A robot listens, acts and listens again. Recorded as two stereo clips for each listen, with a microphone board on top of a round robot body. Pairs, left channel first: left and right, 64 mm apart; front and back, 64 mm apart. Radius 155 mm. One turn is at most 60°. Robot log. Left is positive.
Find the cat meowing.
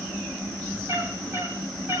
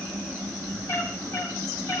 note: The cat meowing: 40° right.
cmd yaw -40
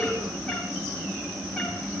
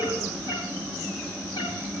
cmd idle
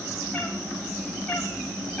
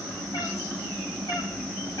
note: The cat meowing is now 20° left.
cmd yaw +20
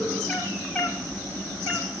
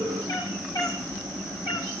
end: Facing the cat meowing, over 4 m away.